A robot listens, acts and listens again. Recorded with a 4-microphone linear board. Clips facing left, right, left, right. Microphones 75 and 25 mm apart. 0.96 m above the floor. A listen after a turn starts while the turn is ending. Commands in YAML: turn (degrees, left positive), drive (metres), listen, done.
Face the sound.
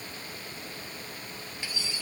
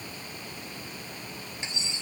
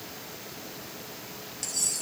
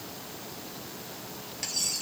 turn: -25
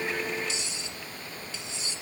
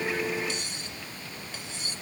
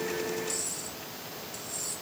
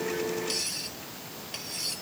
turn: -130
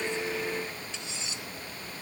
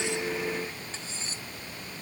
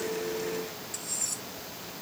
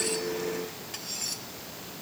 turn: -35
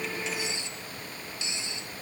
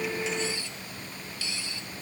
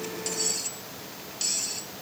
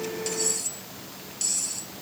turn: 20
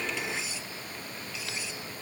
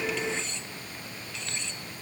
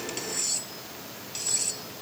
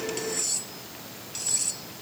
turn: 10
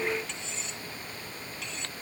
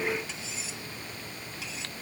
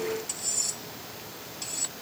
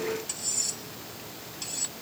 done: "Found it: cutlery clinking, straight ahead."